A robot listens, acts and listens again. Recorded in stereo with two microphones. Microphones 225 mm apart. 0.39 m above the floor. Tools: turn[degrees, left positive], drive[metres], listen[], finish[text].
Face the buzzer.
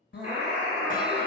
Action: turn[-90]
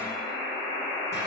Action: finish[Found it: a buzzer, straight ahead.]